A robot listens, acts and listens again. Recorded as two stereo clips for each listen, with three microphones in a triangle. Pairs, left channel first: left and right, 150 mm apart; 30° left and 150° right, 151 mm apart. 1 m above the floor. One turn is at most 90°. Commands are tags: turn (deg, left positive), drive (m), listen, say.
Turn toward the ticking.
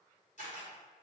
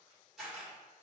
<listen/>
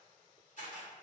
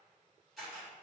<listen/>
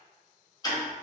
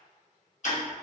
<turn deg="35"/>
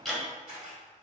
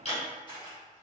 <say>Found it: ticking, straight ahead.</say>